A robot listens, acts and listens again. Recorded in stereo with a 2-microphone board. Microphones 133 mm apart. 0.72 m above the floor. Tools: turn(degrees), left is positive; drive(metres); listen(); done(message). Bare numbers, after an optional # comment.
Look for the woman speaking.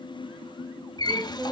turn(30)
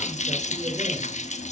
listen()
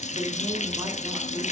listen()
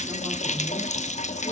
done("I heard a woman speaking, but can't make it out now. It was about 25° right or 145° left.")